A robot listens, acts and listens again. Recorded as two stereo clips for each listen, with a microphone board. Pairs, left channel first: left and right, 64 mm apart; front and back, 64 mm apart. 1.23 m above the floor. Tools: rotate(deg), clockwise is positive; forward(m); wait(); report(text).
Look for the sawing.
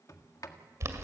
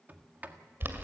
wait()
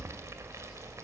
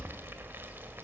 wait()
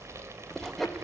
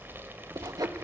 rotate(-180)
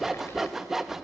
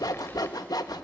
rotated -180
report("Found it: sawing, straight ahead, 1 to 2 m away.")